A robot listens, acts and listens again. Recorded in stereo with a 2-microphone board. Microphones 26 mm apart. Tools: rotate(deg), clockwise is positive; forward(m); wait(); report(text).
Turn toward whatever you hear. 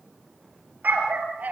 rotate(90)
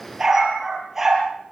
rotate(15)
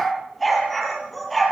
report("Found it: a dog barking, straight ahead, over 4 m away.")